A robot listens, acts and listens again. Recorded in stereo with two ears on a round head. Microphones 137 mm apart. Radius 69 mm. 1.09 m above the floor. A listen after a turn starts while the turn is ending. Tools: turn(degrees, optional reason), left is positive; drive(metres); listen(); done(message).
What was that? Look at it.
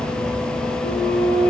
turn(degrees=75, reason="The flute: about 75° left or 105° left.")
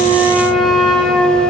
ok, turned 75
done("Found it: a flute, straight ahead.")